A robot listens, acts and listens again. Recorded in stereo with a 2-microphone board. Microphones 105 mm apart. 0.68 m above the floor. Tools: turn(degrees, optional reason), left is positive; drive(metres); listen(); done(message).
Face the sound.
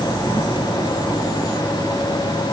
listen()
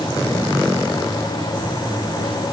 listen()
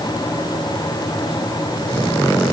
done("I can't make out anything.")